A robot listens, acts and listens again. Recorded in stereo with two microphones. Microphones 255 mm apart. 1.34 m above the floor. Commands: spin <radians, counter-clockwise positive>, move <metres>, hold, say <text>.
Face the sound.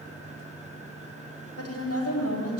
spin 1.57
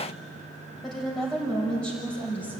say Facing the woman speaking.